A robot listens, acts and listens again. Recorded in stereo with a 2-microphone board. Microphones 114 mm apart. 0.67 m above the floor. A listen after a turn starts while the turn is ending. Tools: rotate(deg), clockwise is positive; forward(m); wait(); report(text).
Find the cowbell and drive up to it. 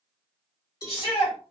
rotate(-35)
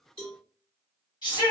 rotate(-105)
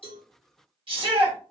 wait()
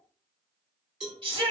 forward(1.0)
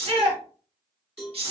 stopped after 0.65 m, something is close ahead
report("Arrived at the cowbell, straight ahead.")